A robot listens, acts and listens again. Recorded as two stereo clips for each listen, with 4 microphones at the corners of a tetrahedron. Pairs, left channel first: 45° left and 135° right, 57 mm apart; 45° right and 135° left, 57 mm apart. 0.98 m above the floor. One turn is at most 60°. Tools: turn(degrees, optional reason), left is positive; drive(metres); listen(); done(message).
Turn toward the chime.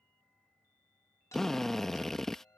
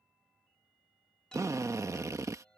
turn(degrees=30, reason="The chime: 30° left.")
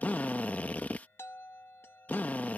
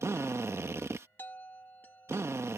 done("Found it: a chime, straight ahead.")